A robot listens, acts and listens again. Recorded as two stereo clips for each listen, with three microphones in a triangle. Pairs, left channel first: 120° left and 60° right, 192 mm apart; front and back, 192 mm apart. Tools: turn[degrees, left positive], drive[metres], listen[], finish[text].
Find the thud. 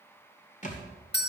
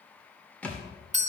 Thought: The thud: 80° left.
Action: turn[80]
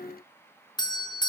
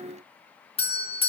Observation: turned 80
Action: finish[Facing where the thud came from. I can't hear it now.]